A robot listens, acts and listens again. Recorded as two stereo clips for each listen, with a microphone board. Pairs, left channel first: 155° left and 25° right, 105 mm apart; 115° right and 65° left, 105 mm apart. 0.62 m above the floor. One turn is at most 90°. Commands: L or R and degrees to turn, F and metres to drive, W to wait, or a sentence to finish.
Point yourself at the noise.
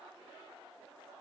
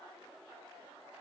W
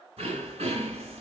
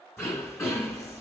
R40
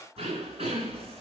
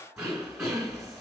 R15
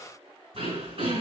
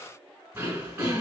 Facing the throat clearing, 2 to 4 m away.